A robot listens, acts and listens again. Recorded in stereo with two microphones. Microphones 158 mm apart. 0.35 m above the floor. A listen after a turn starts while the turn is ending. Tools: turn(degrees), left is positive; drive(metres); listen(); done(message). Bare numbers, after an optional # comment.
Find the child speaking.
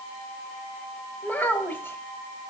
turn(30)
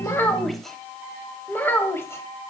turn(30)
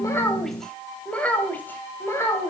# The child speaking: about 20° left or 160° left.
turn(20)
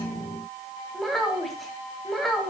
turn(30)
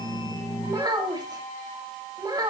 # So it is at 25° right.
turn(-25)
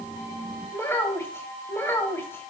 # The child speaking is now 15° left.
turn(15)
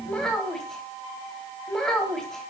done("Found it: a child speaking, straight ahead, 1 to 2 m away.")